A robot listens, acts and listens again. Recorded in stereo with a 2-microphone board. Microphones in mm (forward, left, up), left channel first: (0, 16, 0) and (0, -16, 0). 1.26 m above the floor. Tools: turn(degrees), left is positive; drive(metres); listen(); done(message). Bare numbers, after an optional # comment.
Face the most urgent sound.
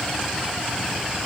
listen()
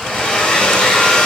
listen()
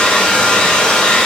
done("I can't make out anything urgent to turn to.")